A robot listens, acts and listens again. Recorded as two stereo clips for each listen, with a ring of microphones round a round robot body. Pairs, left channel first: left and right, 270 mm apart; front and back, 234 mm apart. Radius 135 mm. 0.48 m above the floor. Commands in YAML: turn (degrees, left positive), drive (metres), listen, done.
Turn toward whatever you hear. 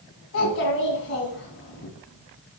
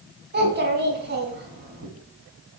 turn: 140
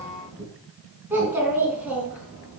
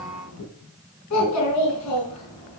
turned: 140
done: "Facing the child speaking."